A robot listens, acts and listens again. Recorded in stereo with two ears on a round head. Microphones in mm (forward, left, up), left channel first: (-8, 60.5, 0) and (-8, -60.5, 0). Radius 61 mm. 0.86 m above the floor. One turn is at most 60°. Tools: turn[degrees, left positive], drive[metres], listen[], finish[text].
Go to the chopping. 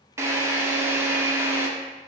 Action: listen[]
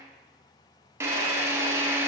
Action: listen[]
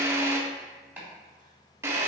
Action: turn[-30]
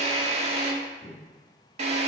Thought: So it is at 15° left.
Action: turn[15]
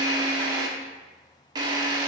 Action: listen[]
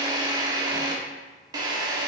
Action: listen[]
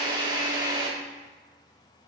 Action: finish[I heard chopping from this way, but can't make it out now. I did not reach it.]